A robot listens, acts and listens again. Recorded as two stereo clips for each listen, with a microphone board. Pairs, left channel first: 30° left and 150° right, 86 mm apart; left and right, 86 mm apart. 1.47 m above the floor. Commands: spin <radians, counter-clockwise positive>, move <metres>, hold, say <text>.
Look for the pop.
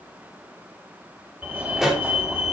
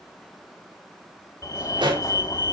spin -1.13
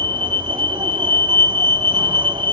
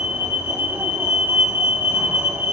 say I heard a pop from this way, but can't make it out now.